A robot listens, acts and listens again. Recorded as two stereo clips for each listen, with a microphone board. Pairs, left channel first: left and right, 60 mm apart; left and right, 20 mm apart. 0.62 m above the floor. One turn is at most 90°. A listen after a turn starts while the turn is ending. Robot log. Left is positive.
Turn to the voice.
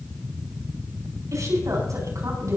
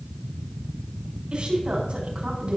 note: The woman speaking: about 65° right or 115° right.
cmd yaw -65
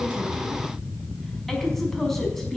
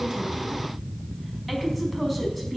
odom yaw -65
end: Facing the woman speaking, over 4 m away.